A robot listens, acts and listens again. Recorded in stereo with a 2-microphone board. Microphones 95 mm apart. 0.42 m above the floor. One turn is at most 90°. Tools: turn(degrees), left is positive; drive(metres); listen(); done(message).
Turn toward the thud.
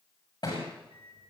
turn(degrees=45)
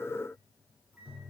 listen()
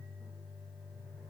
done("I heard a thud, but can't make it out now. It was about straight ahead or 90° left.")